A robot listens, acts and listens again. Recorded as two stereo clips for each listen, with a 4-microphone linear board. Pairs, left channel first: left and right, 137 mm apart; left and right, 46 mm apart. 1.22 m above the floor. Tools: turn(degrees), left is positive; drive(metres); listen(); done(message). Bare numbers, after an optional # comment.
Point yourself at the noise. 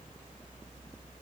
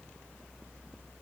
listen()
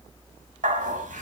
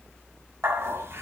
# The dog barking: about 60° right or 120° right.
turn(-60)
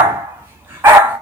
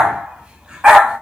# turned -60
# So it is at 15° right.
turn(-15)
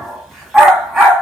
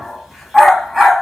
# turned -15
done("Found it: a dog barking, straight ahead, 1 to 2 m away.")